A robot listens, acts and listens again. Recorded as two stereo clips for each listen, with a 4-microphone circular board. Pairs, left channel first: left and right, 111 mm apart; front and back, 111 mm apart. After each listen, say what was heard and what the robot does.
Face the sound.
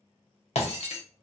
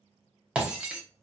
The breaking glass: 100° left. Turn 100° left.
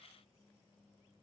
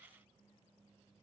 Facing where the breaking glass came from. I can't hear it now.